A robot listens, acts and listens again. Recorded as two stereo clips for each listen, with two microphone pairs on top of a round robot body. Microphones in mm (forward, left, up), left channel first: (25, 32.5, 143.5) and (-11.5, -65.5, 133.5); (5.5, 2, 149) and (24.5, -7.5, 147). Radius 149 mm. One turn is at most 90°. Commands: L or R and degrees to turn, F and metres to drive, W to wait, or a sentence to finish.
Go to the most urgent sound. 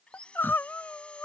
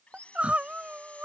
F1.0
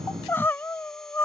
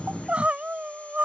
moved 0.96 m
F1.0
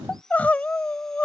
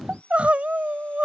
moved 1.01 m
F1.0
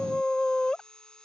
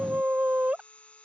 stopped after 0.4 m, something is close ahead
R10
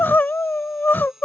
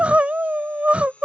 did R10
Arrived at the crying, straight ahead.